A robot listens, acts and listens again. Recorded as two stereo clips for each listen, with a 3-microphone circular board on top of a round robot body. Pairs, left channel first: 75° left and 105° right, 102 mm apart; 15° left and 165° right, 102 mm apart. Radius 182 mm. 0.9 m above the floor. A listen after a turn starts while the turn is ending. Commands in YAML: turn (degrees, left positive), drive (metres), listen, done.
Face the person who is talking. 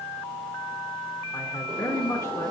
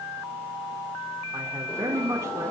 turn: 135
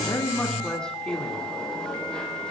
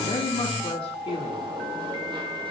done: "Found it: a man speaking, straight ahead, 2 to 4 m away."